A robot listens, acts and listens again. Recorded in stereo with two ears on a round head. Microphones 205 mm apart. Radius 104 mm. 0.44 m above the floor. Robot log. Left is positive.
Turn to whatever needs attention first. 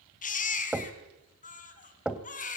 note: The baby crying: about 35° left or 145° left.
cmd yaw +35
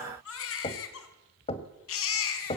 note: So it is at 110° left.
cmd yaw +110
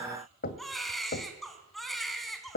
end: Facing the baby crying, 2 to 4 m away.